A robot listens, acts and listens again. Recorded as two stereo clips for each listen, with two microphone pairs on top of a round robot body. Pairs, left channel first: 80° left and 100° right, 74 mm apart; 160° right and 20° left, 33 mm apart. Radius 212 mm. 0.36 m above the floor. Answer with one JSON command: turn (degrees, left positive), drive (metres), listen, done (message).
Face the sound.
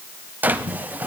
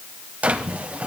{"turn": -30}
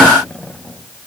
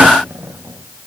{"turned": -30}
{"listen": true}
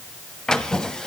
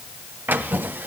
{"done": "Found it: a drawer, straight ahead, 1 to 2 m away."}